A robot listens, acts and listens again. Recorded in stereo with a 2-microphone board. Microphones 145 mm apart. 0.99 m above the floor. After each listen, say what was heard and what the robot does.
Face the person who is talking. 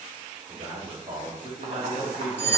The man speaking: about 40° right or 140° right. Turn 40° right.
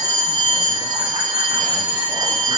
Keep listening.
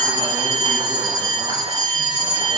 Keep listening.
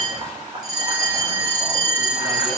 I heard a man speaking, but can't make it out now. It was about straight ahead or 100° right.